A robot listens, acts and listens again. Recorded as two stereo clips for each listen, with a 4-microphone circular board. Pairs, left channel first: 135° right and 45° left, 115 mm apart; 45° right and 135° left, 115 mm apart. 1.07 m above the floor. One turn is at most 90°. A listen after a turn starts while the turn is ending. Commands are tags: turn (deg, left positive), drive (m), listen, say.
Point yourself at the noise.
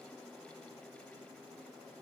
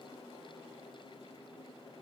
<listen/>
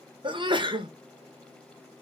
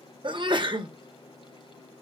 <turn deg="90"/>
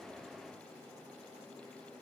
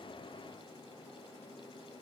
<say>Facing where the sneeze came from. I can't hear it now.</say>